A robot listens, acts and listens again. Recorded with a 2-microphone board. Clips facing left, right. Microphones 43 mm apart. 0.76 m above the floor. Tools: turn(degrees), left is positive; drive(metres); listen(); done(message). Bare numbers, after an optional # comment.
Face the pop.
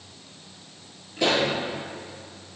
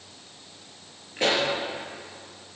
# The pop: about 35° right or 145° right.
turn(-35)
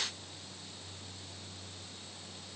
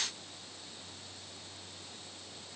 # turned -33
listen()
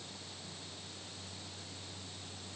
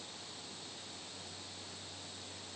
done("I heard a pop, but can't make it out now. It was about 5° right or 110° right.")